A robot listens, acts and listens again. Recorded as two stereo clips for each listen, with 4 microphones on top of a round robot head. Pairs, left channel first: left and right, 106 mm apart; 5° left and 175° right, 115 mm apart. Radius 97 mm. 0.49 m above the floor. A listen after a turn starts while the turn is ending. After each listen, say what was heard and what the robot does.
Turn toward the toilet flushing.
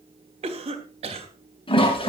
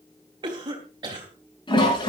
The toilet flushing: 50° left. Turn 50° left.
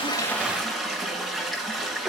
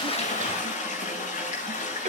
Found it: a toilet flushing, straight ahead, over 4 m away.